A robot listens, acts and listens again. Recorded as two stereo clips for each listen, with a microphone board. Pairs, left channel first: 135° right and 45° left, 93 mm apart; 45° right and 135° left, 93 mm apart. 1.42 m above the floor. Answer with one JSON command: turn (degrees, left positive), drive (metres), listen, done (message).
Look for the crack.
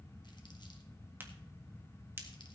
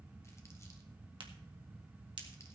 {"turn": 110}
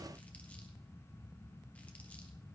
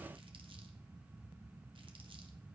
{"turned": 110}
{"done": "I heard a crack from this way, but can't make it out now."}